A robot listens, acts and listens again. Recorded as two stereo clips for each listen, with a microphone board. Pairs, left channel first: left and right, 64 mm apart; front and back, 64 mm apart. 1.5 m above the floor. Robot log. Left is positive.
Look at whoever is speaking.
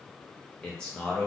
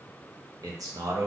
note: The man speaking: 165° left.
cmd yaw +165
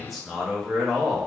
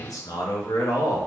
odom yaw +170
end: Found it: a man speaking, straight ahead.